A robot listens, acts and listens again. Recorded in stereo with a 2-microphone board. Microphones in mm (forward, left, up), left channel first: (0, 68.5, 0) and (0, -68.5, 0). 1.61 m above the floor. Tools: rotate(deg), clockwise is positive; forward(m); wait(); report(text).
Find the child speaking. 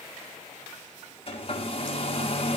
wait()
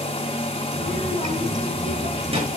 rotate(45)
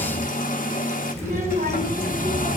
rotate(85)
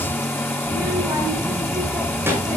rotate(15)
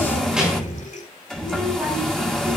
report("Facing the child speaking, over 4 m away.")